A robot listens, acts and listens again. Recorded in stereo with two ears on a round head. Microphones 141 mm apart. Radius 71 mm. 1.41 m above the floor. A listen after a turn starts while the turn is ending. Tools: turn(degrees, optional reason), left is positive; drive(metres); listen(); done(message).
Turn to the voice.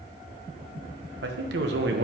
turn(degrees=-90)
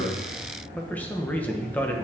turn(degrees=10, reason="So it is at 10° left.")
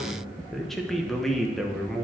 done("Facing the man speaking, 1 to 2 m away.")